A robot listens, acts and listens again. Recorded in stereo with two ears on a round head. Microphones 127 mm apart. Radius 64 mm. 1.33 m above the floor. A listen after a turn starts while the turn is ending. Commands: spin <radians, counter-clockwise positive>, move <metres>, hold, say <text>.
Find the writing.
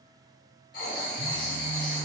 spin 1.13
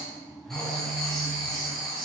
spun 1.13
say Facing the writing, 2 to 4 m away.